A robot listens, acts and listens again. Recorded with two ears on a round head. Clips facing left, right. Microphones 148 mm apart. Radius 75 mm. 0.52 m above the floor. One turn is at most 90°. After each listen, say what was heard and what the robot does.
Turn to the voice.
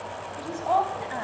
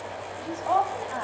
Turn 30° left.
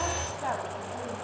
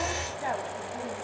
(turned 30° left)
So it is at 15° right. Turn 15° right.
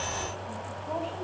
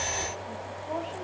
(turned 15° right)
Facing the woman speaking, over 4 m away.